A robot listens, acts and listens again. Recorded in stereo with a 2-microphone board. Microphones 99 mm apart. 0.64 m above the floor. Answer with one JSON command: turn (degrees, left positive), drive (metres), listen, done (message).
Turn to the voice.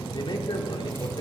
{"turn": 50}
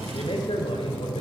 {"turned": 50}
{"turn": 70}
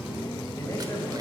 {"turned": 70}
{"listen": true}
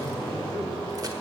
{"turn": 30}
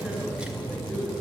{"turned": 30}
{"done": "Facing the man speaking, over 4 m away."}